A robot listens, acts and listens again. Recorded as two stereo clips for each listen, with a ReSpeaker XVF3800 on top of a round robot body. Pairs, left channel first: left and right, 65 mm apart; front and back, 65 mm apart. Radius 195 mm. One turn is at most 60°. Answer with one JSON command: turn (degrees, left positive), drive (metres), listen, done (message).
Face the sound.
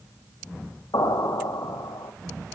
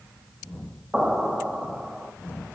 {"turn": 60}
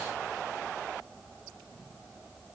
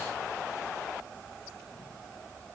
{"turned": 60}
{"turn": 35}
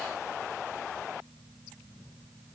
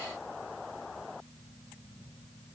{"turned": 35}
{"done": "Facing where the explosion came from. I can't hear it now."}